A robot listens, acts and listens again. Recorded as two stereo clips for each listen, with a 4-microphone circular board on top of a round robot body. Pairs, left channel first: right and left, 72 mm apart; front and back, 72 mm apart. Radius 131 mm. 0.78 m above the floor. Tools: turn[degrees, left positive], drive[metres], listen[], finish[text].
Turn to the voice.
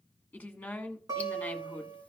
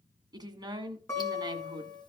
Thought: The woman speaking: 165° right.
Action: turn[-165]
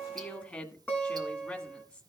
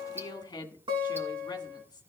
Thought: The woman speaking is now 30° right.
Action: turn[-30]
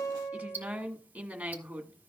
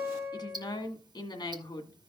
Thought: The woman speaking is now 10° left.
Action: turn[10]
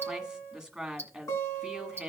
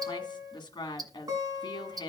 Action: finish[Facing the woman speaking, 1 to 2 m away.]